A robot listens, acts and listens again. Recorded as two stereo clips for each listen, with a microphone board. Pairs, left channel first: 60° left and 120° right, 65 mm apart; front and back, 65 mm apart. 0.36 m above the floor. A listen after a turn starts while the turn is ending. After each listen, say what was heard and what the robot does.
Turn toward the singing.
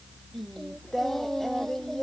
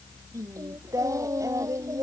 The singing: 145° left. Turn 145° left.
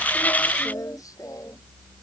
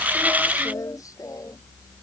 The singing is now 30° left. Turn 30° left.
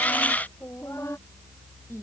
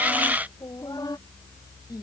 The singing is now 15° left. Turn 15° left.
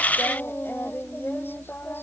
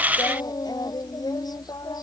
Found it: singing, straight ahead.